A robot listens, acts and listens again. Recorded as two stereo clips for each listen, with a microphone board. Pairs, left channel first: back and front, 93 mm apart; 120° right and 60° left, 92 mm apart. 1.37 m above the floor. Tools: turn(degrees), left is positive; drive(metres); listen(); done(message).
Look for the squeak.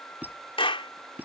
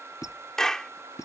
turn(degrees=-70)
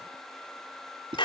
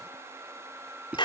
turn(degrees=-15)
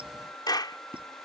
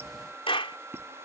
listen()
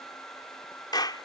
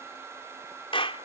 listen()
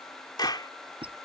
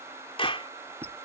done("Found it: a squeak, straight ahead.")